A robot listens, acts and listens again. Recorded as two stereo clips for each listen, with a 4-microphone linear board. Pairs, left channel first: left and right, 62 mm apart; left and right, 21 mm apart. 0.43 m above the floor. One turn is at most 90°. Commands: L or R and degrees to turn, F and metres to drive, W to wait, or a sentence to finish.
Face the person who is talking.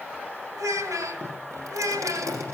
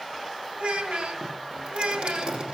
R60
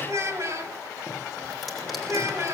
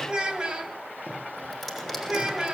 R50
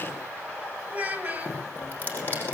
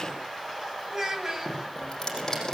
R25
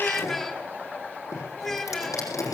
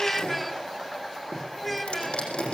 Facing the child speaking.